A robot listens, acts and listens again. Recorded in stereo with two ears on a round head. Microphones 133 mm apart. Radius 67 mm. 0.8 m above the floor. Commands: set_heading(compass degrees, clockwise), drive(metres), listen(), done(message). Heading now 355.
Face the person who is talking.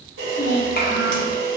set_heading(285)
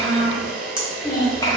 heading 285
set_heading(260)
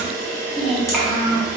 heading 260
done("Found it: a child speaking, straight ahead, 1 to 2 m away.")